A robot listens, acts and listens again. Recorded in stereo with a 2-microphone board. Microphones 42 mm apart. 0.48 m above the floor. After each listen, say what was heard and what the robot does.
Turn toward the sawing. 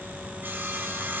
The sawing: about 50° right or 130° right. Turn 50° right.
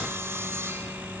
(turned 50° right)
So it is at 80° right. Turn 80° right.
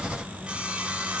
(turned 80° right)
The sawing is now 25° right. Turn 25° right.
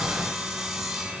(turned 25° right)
The sawing is now 10° right. Turn 10° right.
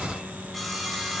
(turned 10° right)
Found it: sawing, straight ahead, over 4 m away.